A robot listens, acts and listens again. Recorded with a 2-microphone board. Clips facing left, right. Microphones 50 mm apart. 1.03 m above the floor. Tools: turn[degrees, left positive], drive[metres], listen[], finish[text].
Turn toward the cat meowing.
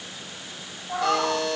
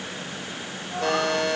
Thought: The cat meowing: about 40° left or 140° left.
Action: turn[40]
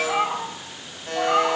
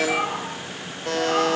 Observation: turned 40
Thought: So it is at 15° left.
Action: turn[15]
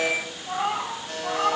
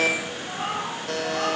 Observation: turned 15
Thought: The cat meowing is now 15° left.
Action: turn[15]
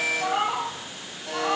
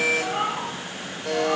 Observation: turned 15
Action: finish[Found it: a cat meowing, straight ahead, 2 to 4 m away.]